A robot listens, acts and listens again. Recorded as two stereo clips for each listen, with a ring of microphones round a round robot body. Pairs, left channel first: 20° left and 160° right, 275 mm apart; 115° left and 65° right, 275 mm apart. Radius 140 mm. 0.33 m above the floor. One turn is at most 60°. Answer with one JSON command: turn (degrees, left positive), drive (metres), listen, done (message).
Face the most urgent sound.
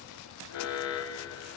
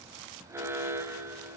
{"turn": 10}
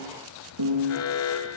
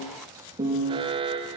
{"done": "Facing the alarm, 2 to 4 m away."}